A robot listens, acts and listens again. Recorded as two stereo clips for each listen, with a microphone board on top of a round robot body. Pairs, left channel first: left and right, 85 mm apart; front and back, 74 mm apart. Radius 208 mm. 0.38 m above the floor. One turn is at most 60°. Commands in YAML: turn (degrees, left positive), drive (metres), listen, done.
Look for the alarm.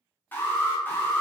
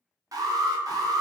turn: 60
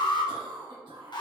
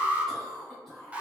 turn: 60
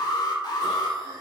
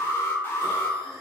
turn: 60
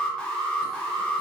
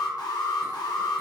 turn: 10
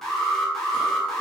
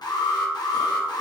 done: "Facing the alarm, 1 to 2 m away."